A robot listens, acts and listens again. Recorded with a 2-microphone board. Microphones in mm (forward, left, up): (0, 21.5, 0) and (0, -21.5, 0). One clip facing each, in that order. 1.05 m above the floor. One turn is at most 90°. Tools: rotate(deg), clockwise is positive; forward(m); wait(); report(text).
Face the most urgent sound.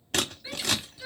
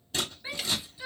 rotate(25)
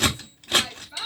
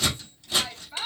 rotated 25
report("Found it: a shout, straight ahead, 2 to 4 m away.")